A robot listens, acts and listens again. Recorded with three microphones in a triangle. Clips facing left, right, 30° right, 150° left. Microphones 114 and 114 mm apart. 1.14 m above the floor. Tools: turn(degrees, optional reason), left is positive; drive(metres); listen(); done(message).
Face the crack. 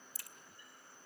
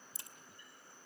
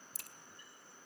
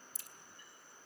turn(degrees=-25, reason="The crack: 25° right.")
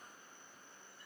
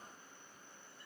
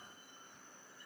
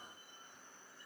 done("Facing where the crack came from. I can't hear it now.")